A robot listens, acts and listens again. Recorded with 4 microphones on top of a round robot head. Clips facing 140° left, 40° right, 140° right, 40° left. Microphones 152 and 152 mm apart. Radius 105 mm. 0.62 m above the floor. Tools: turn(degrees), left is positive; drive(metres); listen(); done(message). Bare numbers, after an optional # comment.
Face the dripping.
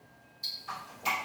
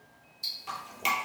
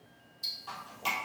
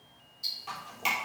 # The dripping: 40° right.
turn(-40)
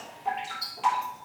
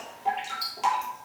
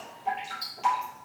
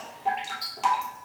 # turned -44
done("Found it: dripping, straight ahead, 2 to 4 m away.")